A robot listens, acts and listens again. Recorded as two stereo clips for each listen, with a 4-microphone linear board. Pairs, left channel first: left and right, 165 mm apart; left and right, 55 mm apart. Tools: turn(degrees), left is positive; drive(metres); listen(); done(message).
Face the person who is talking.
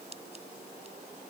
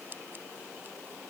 listen()
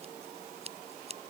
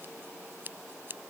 listen()
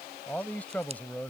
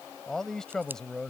turn(degrees=30)
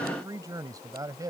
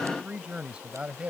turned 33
turn(degrees=-25)
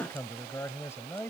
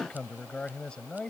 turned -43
turn(degrees=15)
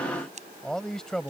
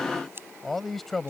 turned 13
done("Facing the man speaking.")